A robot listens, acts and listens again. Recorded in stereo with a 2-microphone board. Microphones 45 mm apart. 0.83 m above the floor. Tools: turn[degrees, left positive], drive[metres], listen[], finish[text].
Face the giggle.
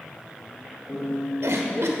Action: turn[-90]
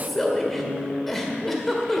Thought: So it is at 10° left.
Action: turn[10]
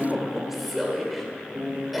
Action: finish[Facing the giggle.]